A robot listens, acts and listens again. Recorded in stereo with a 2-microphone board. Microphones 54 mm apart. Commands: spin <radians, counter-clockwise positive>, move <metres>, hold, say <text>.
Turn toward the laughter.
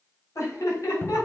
spin 1.22
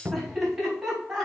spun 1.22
spin -0.17
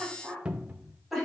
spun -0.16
say Facing the laughter, over 4 m away.